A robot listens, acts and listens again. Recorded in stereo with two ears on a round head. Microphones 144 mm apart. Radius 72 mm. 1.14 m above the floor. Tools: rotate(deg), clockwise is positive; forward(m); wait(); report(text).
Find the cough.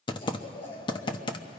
rotate(-35)
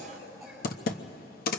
report("Found it: a cough, straight ahead.")